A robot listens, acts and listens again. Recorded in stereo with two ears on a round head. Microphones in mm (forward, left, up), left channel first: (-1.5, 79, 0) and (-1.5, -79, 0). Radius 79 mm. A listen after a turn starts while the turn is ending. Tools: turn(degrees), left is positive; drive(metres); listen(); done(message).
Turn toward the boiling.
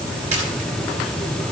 listen()
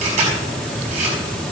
listen()
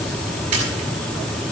done("I can't make out boiling to turn to.")